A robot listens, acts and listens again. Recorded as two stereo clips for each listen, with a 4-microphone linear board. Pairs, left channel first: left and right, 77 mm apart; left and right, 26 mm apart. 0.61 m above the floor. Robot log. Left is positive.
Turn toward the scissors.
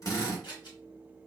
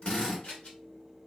note: The scissors: about 65° left or 115° left.
cmd yaw +65
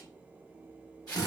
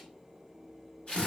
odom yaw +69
cmd idle
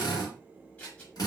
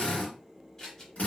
note: So it is at 20° left.
cmd yaw +20
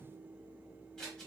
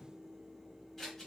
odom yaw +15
end: Facing the scissors, 1 to 2 m away.